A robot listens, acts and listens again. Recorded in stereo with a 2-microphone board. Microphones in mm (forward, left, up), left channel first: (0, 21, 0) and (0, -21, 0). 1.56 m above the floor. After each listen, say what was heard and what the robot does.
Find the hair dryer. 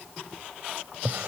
Keep listening.
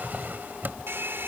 The hair dryer: about 60° right or 120° right. Turn 60° right.
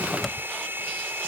So it is at 60° right. Turn 60° right.
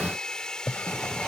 The hair dryer is now 15° left. Turn 15° left.
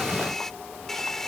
Facing the hair dryer.